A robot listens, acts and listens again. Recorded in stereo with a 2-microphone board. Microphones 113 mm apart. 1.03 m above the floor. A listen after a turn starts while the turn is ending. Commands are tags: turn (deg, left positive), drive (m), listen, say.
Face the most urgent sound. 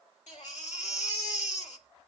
<turn deg="90"/>
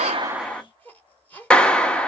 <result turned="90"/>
<turn deg="15"/>
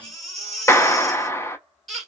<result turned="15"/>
<say>Facing the baby crying.</say>